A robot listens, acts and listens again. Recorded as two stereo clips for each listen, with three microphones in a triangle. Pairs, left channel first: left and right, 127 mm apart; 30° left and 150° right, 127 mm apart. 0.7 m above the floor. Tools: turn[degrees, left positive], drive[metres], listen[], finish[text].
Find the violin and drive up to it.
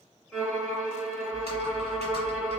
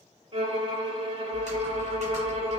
Thought: The violin: 175° left.
Action: turn[175]
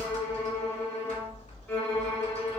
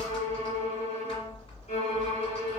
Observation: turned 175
Thought: The violin is now 15° left.
Action: turn[15]
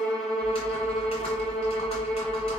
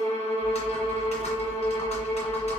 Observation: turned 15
Action: drive[1.0]
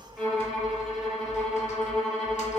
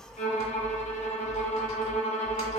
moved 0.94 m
Action: drive[1.0]
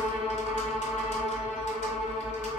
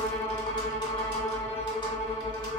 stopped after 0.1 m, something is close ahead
Thought: The violin is now 10° right.
Action: turn[-10]
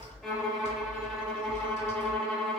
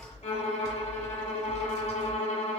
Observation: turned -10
Action: finish[I am next to the violin.]